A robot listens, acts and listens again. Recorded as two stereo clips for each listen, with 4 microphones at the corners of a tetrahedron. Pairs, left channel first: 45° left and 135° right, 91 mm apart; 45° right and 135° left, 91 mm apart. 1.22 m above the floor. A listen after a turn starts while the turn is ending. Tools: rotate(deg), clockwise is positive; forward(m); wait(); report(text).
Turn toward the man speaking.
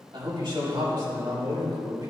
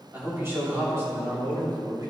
rotate(175)
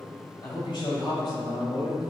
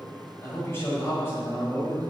rotate(-15)
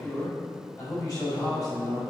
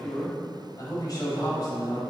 report("Facing the man speaking.")